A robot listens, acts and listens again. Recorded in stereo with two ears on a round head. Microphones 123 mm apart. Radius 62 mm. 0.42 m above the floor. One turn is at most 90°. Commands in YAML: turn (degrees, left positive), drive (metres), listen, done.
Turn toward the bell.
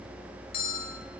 turn: 70
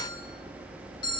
turn: 30
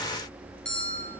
turn: 10
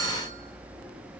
listen: true
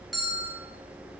done: "Found it: a bell, straight ahead."